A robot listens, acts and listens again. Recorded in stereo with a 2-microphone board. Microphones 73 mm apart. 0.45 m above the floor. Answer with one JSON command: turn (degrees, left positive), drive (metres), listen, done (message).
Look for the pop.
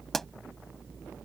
{"turn": 30}
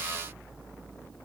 {"listen": true}
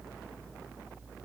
{"done": "I heard a pop, but can't make it out now. It was about 25° right or 145° left."}